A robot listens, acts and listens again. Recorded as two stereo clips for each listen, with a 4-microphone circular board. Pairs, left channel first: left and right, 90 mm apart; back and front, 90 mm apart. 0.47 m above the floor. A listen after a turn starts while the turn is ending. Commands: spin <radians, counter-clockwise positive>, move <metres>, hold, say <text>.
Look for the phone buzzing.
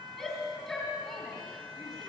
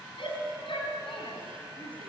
hold
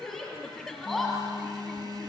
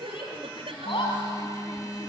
spin -2.27
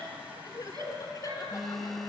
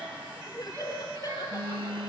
say Found it: a phone buzzing, straight ahead, 1 to 2 m away.